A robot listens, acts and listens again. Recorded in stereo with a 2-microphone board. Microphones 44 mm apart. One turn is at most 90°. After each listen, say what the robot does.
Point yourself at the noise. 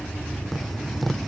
Turn 30° left.
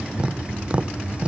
Turn 30° right.
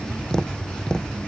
Turn 15° left.
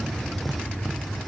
Keep listening.
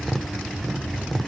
Facing the tapping.